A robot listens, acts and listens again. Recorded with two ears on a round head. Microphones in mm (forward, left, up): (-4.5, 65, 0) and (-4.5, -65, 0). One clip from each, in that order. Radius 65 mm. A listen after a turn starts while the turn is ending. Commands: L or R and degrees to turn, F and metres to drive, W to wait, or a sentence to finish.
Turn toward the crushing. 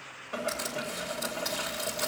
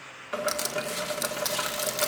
R45
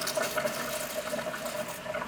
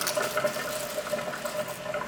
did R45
W
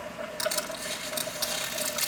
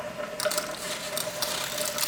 R10
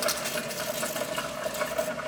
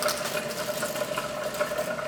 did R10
Facing the crushing, 1 to 2 m away.